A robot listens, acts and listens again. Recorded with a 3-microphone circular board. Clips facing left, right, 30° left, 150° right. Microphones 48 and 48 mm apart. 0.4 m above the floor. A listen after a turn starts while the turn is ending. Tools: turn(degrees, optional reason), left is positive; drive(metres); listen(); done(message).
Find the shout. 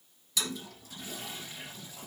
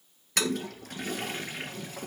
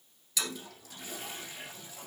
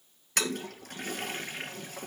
listen()
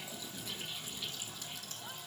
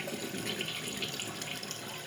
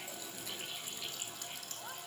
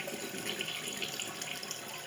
listen()
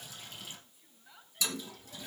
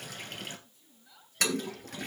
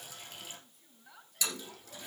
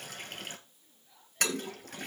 turn(degrees=20, reason="The shout: 20° left.")
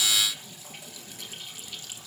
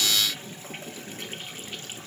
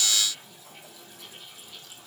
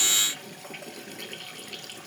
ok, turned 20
listen()
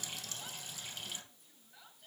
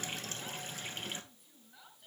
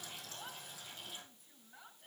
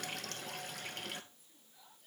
done("Found it: a shout, straight ahead, over 4 m away.")